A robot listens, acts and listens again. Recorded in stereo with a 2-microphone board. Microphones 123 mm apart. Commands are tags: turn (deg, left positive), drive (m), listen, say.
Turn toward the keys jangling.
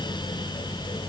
<listen/>
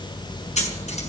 <listen/>
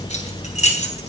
<turn deg="90"/>
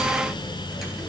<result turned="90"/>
<listen/>
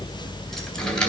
<say>Found it: keys jangling, straight ahead.</say>